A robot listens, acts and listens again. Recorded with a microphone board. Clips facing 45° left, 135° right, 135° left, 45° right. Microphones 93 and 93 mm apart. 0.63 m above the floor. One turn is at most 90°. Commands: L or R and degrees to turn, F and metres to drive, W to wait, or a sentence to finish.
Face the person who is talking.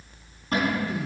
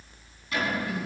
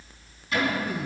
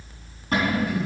L90
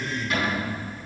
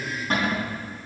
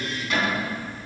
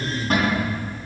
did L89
L15
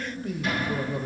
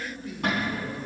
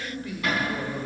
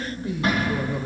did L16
L25
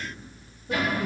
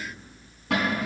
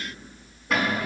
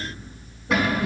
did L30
W
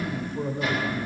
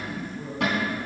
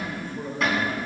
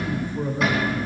L30
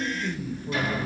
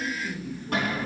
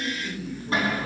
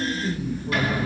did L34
L15
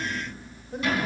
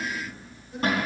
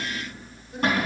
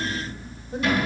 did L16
W
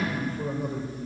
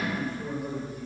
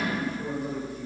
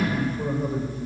Facing the man speaking, 1 to 2 m away.